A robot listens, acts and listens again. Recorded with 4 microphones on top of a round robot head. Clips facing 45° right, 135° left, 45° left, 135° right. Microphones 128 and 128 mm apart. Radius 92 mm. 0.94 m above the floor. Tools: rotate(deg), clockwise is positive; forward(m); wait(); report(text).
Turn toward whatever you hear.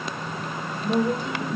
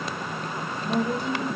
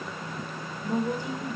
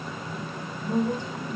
rotate(35)
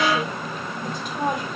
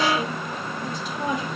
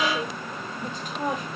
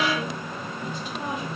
report("Found it: a woman speaking, straight ahead.")